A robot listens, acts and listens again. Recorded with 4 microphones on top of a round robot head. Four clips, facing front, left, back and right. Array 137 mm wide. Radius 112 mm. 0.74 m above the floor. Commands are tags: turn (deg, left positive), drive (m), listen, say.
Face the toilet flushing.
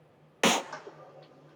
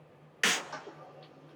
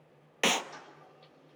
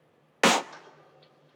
<turn deg="30"/>
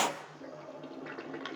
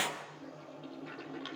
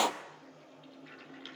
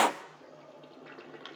<say>Found it: a toilet flushing, straight ahead, 2 to 4 m away.</say>